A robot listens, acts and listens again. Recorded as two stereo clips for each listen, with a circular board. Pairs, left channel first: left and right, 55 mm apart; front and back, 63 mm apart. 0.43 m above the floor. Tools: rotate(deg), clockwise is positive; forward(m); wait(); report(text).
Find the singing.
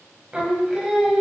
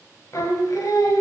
rotate(15)
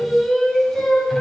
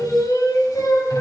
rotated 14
report("Found it: singing, straight ahead.")